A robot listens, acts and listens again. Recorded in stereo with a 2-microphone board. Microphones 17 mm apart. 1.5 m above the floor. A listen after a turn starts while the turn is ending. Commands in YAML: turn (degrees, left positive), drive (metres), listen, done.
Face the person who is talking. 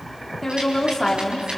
turn: 30
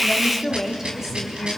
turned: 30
turn: -20
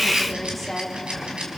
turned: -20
done: "Facing the woman speaking, 2 to 4 m away."